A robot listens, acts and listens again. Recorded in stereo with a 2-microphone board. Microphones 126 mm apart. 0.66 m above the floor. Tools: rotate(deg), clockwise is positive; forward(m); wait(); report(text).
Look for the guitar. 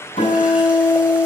rotate(-70)
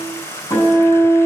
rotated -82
rotate(-30)
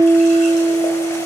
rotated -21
rotate(-10)
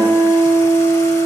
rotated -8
report("Found it: a guitar, straight ahead, over 4 m away.")